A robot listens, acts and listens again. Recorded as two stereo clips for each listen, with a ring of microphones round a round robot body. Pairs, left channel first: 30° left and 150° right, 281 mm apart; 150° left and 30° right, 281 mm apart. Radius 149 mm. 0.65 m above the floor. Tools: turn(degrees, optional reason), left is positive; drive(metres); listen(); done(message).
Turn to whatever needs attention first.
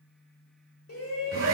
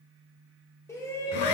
turn(degrees=70, reason="The shout: 70° left.")
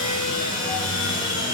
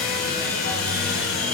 listen()
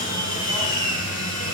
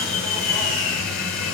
listen()
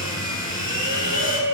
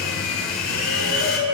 done("Facing the shout, 2 to 4 m away.")